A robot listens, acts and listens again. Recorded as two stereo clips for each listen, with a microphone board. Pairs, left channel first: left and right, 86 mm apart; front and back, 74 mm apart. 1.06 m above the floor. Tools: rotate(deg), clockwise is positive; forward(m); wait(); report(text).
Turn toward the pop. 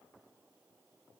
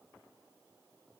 wait()
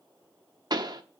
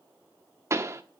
rotate(130)
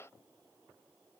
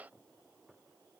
report("Facing where the pop came from. I can't hear it now.")